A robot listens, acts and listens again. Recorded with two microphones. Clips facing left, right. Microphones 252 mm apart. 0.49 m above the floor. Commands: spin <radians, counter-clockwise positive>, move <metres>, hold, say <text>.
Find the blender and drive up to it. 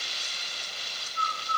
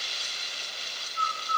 hold
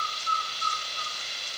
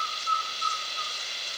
hold
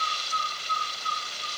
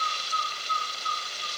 say I can't make out a blender, only a bird.